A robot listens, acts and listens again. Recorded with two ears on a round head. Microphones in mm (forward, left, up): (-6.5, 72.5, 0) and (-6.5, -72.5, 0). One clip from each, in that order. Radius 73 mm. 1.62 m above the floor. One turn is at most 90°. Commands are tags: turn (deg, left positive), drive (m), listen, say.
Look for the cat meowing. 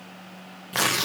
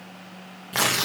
<listen/>
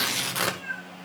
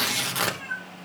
<turn deg="-25"/>
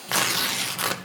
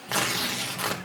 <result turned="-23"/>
<listen/>
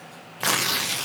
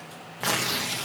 <listen/>
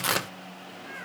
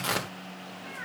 <turn deg="-35"/>
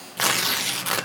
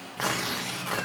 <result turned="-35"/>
<turn deg="-90"/>
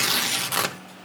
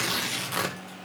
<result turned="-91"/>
<turn deg="-20"/>
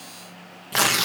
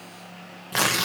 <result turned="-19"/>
<listen/>
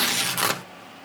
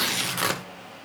<say>I heard a cat meowing from this way, but can't make it out now.</say>